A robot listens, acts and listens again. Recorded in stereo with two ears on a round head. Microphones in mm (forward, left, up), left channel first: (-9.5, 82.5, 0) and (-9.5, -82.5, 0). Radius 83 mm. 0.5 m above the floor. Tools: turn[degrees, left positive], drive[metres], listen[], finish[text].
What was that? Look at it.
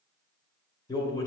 Thought: The man speaking: about 20° left or 160° left.
Action: turn[20]
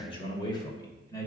Thought: The man speaking: about 15° left or 165° left.
Action: turn[15]
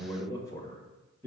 Action: turn[30]
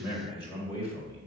Thought: The man speaking: about 20° left or 160° left.
Action: turn[20]
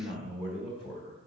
Thought: The man speaking: about 30° left or 150° left.
Action: turn[30]
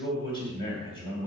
Thought: So it is at 125° left.
Action: turn[125]
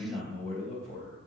Action: finish[Found it: a man speaking, straight ahead.]